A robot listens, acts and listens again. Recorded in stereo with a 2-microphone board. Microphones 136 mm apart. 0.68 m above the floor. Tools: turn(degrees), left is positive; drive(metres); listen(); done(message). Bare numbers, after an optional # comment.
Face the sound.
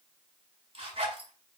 # The zipper: about 45° right or 135° right.
turn(-45)
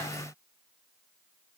listen()
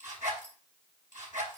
# So it is at 90° right.
turn(-90)
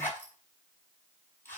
# The zipper is now 15° left.
turn(15)
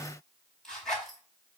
done("Facing the zipper, over 4 m away.")